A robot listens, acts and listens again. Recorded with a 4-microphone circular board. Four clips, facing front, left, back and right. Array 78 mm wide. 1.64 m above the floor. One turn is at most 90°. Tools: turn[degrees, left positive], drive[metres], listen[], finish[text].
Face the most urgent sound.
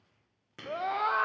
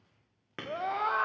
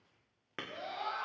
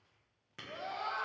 Thought: The scream: 35° left.
Action: turn[35]
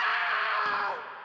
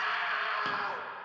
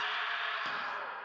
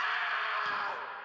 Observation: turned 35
Action: finish[Facing the scream, 1 to 2 m away.]